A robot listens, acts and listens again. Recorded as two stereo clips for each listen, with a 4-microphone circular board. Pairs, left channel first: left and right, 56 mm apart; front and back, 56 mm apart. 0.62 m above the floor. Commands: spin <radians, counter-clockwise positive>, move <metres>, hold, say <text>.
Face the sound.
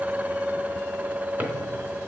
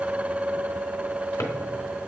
spin -0.61
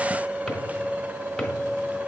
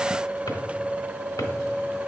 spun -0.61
hold
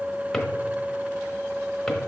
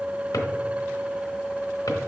hold
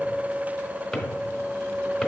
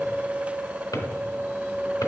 say Found it: a drawer, straight ahead, under 1 m away.